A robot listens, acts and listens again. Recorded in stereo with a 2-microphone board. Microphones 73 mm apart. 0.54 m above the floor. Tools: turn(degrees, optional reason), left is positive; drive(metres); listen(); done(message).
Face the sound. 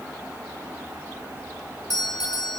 turn(degrees=70, reason="The doorbell: about 70° left or 110° left.")
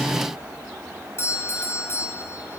turn(degrees=35, reason="So it is at 35° left.")
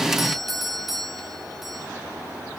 done("Found it: a doorbell, straight ahead, over 4 m away.")